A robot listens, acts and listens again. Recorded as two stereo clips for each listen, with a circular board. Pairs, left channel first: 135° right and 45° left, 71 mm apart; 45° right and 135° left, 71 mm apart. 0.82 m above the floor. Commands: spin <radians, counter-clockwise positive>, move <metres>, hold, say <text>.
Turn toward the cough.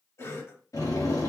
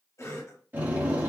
spin -1.57
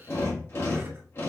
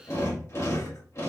hold
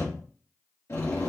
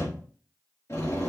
hold
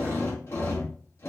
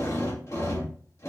say Facing where the cough came from. I can't hear it now.